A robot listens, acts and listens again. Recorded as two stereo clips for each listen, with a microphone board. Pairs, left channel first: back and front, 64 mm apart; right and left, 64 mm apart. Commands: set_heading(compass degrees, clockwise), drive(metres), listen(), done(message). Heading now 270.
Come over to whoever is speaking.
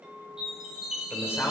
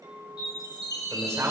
set_heading(140)
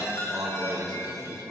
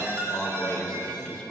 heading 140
set_heading(155)
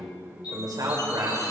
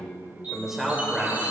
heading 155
drive(1.0)
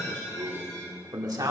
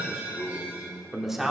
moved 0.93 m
drive(1.0)
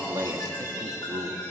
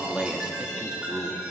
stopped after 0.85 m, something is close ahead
set_heading(140)
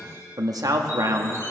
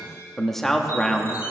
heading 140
done("I am next to the man speaking.")